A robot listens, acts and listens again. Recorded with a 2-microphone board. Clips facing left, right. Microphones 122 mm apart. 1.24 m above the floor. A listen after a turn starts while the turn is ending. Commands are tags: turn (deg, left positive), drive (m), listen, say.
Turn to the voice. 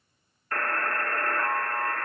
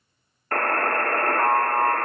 <listen/>
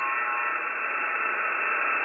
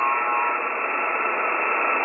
<listen/>
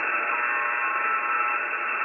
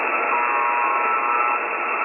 <say>I can't make out anyone speaking, only a buzzer.</say>